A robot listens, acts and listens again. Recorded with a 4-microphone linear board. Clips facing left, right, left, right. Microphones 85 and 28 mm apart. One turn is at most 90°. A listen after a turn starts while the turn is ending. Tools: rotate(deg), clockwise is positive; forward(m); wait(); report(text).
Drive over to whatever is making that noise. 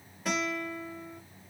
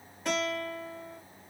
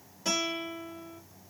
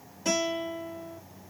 rotate(-30)
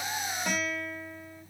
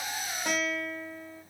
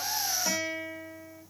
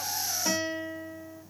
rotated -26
rotate(25)
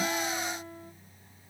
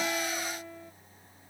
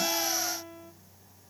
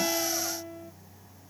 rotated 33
forward(1.0)
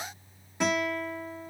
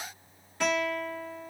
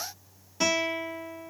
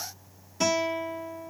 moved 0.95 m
rotate(-15)
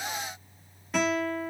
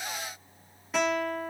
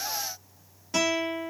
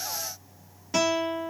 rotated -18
forward(1.0)
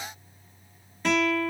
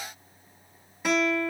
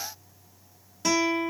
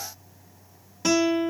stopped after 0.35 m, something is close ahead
rotate(10)
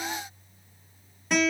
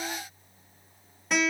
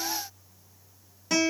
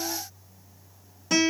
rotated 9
report("Arrived at the guitar, straight ahead.")